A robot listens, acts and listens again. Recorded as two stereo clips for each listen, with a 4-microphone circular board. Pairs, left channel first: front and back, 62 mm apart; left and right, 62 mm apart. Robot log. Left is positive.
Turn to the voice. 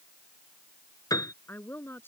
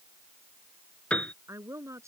note: The woman speaking: 55° right.
cmd yaw -55
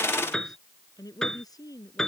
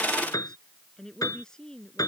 note: The woman speaking is now 10° left.
cmd yaw +10
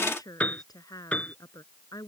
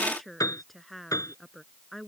end: Facing the woman speaking.